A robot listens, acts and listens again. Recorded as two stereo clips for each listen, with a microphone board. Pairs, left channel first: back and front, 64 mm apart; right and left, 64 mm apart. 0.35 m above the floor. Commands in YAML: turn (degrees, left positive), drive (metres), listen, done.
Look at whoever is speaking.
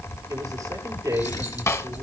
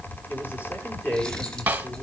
turn: -40
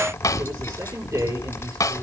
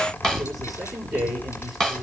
done: "Facing the man speaking, over 4 m away."